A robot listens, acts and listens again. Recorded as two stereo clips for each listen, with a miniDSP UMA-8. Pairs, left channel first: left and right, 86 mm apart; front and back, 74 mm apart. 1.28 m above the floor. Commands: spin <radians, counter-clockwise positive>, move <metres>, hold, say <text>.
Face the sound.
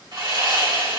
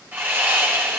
spin -2.01
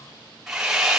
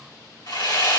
say Found it: sawing, straight ahead.